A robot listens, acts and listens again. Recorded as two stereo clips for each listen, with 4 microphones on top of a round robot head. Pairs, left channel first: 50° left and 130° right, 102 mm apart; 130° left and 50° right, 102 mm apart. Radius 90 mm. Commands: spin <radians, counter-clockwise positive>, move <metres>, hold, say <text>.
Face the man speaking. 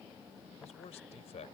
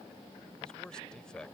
spin 0.79
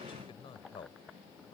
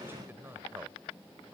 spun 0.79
spin 0.35
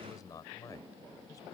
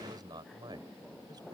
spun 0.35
say Found it: a man speaking, straight ahead.